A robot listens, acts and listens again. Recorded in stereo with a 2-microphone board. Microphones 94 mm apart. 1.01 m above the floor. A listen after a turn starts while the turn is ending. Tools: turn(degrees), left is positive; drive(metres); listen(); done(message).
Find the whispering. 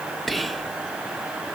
turn(degrees=30)
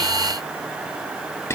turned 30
turn(degrees=150)
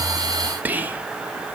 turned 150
turn(degrees=-20)
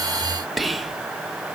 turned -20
done("Facing the whispering.")